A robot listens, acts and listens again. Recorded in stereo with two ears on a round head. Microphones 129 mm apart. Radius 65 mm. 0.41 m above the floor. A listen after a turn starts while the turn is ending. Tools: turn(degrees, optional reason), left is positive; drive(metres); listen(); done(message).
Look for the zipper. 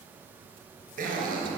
turn(degrees=-60, reason="The zipper: about 60° right or 120° right.")
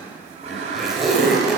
done("Found it: a zipper, straight ahead, 2 to 4 m away.")